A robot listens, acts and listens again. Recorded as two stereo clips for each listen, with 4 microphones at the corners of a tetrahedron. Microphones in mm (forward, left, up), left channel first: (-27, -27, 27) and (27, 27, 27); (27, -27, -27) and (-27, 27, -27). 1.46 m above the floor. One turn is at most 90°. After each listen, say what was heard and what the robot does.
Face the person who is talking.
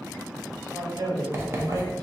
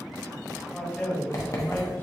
The man speaking: 20° left. Turn 20° left.
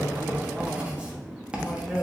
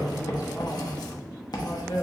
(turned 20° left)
The man speaking is now 45° right. Turn 45° right.
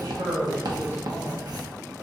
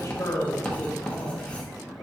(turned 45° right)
Found it: a man speaking, straight ahead.